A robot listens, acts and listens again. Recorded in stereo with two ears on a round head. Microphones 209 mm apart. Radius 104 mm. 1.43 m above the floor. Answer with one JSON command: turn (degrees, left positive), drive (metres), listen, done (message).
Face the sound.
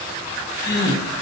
{"turn": 50}
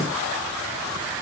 {"listen": true}
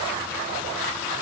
{"done": "I heard a gasp, but can't make it out now. It was about straight ahead or 80° left."}